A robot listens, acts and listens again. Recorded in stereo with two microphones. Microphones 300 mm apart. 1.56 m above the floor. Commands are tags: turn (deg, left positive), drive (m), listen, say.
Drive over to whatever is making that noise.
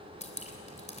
<turn deg="20"/>
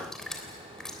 <drive m="1.0"/>
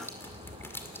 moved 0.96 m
<turn deg="10"/>
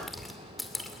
<drive m="1.0"/>
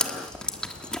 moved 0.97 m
<drive m="1.0"/>
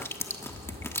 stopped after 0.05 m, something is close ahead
<turn deg="10"/>
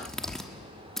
<say>I am next to the dripping.</say>